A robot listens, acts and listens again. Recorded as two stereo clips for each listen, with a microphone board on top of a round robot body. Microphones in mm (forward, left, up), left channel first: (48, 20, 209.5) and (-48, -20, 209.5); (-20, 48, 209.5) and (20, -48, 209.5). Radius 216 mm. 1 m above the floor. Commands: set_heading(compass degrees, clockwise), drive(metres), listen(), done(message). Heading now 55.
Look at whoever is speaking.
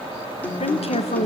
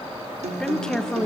set_heading(25)
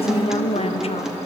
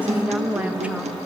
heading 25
set_heading(15)
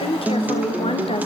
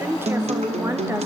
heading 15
done("Found it: a woman speaking, straight ahead, 1 to 2 m away.")